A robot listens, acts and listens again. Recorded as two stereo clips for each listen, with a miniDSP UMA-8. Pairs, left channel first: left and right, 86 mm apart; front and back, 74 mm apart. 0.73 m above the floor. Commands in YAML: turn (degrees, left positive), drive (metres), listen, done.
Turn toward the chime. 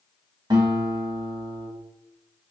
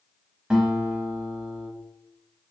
listen: true
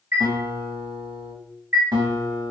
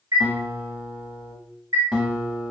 turn: -145
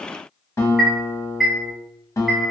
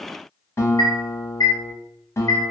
done: "Found it: a chime, straight ahead."